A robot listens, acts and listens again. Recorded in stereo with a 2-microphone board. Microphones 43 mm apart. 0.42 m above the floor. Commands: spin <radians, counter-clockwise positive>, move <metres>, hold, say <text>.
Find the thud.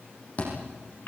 spin 0.70
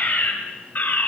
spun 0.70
hold
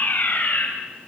say I heard a thud, but can't make it out now. It was about straight ahead or 100° left.